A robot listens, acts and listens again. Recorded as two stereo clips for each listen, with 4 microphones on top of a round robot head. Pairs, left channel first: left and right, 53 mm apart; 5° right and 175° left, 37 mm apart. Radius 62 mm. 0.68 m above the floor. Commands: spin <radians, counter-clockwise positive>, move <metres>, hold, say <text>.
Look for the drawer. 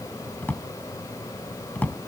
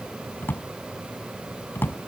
spin 0.44
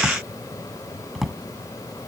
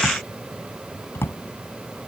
say Facing the drawer.